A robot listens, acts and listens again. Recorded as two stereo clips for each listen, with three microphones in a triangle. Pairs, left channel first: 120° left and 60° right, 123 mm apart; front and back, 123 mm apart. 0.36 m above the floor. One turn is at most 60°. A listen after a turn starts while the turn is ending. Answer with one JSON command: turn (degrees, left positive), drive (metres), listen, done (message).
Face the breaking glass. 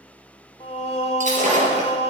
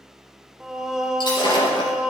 {"turn": -50}
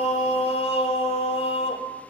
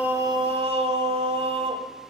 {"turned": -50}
{"done": "I heard breaking glass from this way, but can't make it out now."}